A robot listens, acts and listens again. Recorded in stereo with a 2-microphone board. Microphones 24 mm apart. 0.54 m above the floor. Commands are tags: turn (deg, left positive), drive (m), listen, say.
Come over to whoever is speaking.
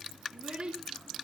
<turn deg="-45"/>
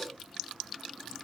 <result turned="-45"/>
<listen/>
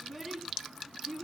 <drive m="1.0"/>
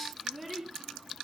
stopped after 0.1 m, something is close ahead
<say>Something is in my way. I am facing the child speaking but have not reached it.</say>